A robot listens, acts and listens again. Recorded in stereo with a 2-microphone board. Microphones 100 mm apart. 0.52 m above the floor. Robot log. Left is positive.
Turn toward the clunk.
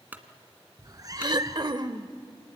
note: The clunk: about 20° right or 160° right.
cmd yaw -20
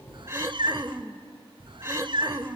cmd idle
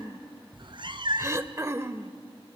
end: I heard a clunk, but can't make it out now. It was about straight ahead or 140° right.